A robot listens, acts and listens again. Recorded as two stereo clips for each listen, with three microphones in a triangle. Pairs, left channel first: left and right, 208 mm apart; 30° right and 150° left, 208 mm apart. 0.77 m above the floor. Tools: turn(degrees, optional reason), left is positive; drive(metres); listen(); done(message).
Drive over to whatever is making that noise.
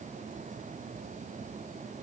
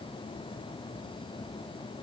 listen()
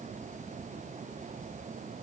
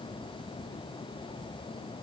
listen()
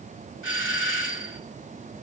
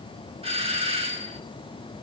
turn(degrees=90, reason="The doorbell: 90° left.")
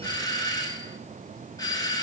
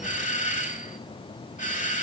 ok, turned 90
turn(degrees=20, reason="The doorbell is now 20° left.")
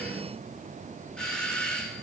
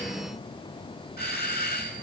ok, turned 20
drive(metres=1.0)
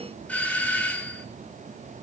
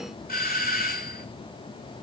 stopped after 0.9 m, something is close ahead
turn(degrees=10, reason="The doorbell is now 10° left.")
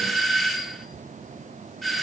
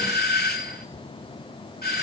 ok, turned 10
done("Blocked. The doorbell is further on, straight ahead.")